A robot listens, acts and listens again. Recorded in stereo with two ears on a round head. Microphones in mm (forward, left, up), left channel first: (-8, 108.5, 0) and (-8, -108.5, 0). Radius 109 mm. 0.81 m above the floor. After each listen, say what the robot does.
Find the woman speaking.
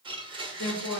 Turn 45° left.
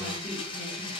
Keep listening.
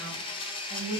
Turn 20° right.
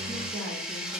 Keep listening.
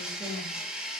Keep listening.
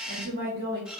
Turn 35° right.
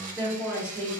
Turn 20° right.
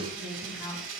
Found it: a woman speaking, straight ahead, 1 to 2 m away.